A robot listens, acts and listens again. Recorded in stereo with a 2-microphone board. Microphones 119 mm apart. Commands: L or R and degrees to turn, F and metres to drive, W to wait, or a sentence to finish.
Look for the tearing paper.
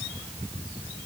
W
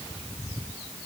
W
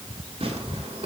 R60
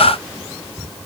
W
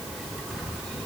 W
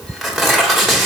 Found it: tearing paper, straight ahead.